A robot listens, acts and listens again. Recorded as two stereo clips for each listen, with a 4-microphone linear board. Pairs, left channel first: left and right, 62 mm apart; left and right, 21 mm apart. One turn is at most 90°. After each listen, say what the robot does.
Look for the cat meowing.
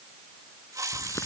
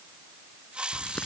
Keep listening.
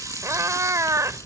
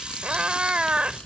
Turn 60° right.
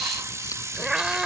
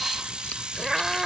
Turn 15° right.
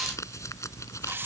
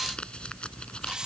Keep listening.
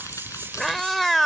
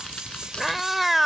Found it: a cat meowing, straight ahead.